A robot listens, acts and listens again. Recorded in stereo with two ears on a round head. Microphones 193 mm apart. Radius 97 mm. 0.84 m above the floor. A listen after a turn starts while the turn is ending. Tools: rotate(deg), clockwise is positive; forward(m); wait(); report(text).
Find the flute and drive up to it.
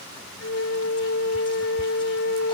rotate(-65)
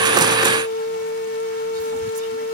rotate(-45)
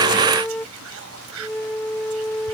rotate(-10)
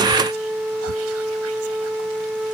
forward(1.0)
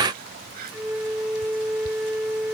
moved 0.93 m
forward(1.0)
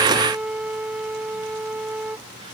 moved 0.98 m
forward(1.0)
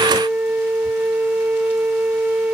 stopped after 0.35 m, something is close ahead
rotate(10)
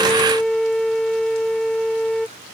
report("I am next to the flute.")